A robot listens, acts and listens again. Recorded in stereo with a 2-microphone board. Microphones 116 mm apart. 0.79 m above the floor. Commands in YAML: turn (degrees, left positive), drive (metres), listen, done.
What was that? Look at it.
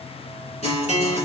turn: 70
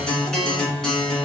done: "Facing the guitar."